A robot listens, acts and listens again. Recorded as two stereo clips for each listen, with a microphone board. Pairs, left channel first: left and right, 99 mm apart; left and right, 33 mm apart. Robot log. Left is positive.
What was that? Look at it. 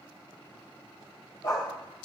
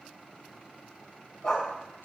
note: The dog barking: about 45° left or 135° left.
cmd yaw +45
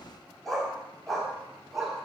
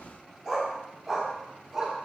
end: Facing the dog barking.